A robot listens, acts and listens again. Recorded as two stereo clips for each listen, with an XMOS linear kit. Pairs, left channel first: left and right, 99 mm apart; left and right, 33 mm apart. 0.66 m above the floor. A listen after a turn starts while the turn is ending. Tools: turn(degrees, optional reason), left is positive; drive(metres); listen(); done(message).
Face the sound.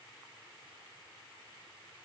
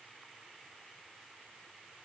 listen()
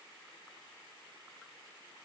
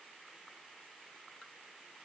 listen()
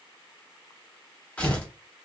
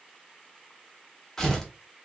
turn(degrees=30)
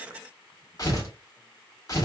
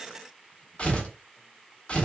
turn(degrees=135, reason="So it is at 135° left.")
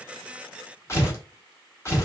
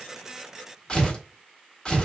turn(degrees=35, reason="The tearing paper is now 35° left.")
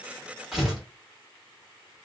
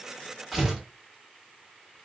done("Facing the tearing paper.")